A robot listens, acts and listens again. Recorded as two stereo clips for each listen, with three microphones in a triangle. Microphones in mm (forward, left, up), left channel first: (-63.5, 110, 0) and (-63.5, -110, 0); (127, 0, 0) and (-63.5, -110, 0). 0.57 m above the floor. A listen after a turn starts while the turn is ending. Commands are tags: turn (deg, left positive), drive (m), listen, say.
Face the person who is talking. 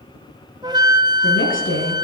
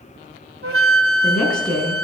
<turn deg="115"/>
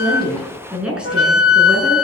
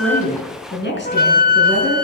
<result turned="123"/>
<say>Facing the woman speaking.</say>